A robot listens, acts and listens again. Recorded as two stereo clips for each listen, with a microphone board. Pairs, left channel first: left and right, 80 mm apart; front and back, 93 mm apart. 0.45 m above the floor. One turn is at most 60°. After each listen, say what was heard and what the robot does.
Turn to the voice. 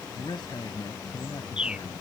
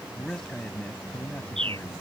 The man speaking: 75° left. Turn 60° left.
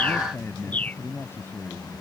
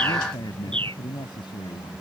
The man speaking is now 25° left. Turn 25° left.
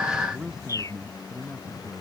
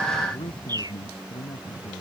The man speaking is now 10° right. Turn 10° right.
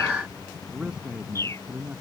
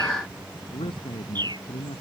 The man speaking is now 10° right. Turn 10° right.
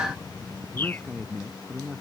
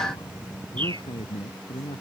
Found it: a man speaking, straight ahead.